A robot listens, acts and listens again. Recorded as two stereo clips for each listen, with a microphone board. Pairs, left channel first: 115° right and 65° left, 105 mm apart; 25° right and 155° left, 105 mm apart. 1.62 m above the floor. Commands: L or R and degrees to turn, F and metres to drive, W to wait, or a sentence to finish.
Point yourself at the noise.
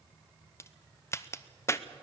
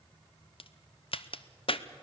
R50
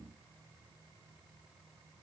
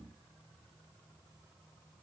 Facing where the crack came from. I can't hear it now.